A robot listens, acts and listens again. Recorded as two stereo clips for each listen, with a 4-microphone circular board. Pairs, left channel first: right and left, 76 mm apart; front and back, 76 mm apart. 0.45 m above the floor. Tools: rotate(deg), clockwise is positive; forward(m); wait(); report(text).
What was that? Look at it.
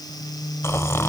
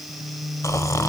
rotate(40)
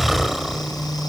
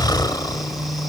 report("Facing the snoring.")